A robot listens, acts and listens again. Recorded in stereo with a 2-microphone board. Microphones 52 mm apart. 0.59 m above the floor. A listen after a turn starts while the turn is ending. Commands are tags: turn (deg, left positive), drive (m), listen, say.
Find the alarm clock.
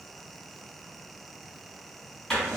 <listen/>
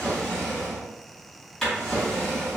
<listen/>
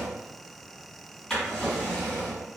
<say>I can't make out an alarm clock, only a drawer.</say>